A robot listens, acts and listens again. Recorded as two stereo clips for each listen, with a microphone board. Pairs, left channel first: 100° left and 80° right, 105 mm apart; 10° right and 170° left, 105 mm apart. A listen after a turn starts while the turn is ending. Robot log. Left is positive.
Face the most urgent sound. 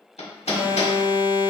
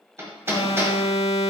note: The alarm: 15° right.
cmd yaw -15
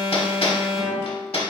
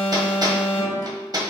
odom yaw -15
end: Found it: an alarm, straight ahead, under 1 m away.